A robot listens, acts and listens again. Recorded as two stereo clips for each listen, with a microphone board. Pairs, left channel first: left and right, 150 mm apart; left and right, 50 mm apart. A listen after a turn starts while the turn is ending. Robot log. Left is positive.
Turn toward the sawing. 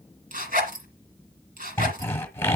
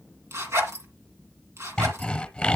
cmd yaw +30
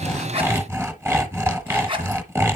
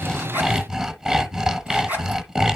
note: So it is at 15° right.
cmd yaw -15
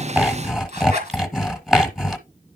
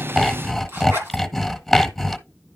end: Found it: sawing, straight ahead, 1 to 2 m away.